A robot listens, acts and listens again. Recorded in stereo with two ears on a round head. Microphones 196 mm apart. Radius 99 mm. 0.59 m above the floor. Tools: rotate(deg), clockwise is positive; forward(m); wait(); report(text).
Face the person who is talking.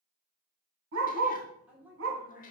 rotate(30)
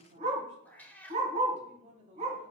rotate(140)
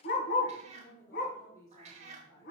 rotate(-20)
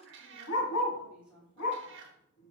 report("Found it: a woman speaking, straight ahead.")